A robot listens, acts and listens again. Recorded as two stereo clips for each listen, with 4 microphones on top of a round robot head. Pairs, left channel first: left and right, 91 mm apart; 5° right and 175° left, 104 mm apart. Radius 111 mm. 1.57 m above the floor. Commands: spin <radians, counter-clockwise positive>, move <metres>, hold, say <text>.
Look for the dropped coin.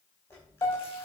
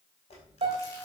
spin 0.35
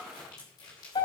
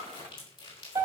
say Facing where the dropped coin came from. I can't hear it now.